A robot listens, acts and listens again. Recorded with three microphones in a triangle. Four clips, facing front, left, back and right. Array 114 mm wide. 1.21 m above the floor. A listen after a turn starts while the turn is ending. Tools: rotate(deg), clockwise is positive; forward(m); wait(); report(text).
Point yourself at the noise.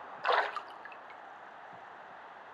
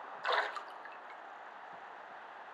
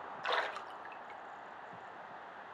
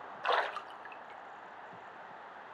rotate(25)
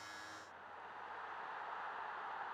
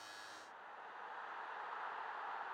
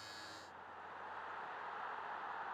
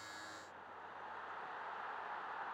report("Facing where the splash came from. I can't hear it now.")